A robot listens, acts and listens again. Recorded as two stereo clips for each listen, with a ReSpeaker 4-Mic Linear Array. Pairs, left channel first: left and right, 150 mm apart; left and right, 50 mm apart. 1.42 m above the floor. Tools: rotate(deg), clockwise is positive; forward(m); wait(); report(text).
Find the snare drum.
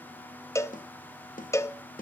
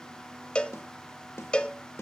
rotate(-65)
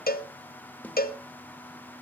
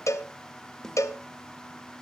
wait()
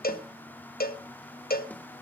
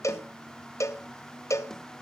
wait()
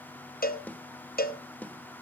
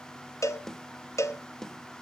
rotate(-10)
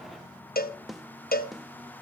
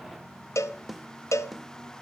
report("Found it: a snare drum, straight ahead, 1 to 2 m away.")